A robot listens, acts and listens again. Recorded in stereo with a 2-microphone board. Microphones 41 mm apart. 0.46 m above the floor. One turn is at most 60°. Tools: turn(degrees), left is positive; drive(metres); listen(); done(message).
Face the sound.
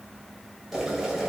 turn(degrees=-30)
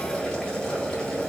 turn(degrees=20)
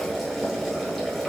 done("Found it: boiling, straight ahead, 1 to 2 m away.")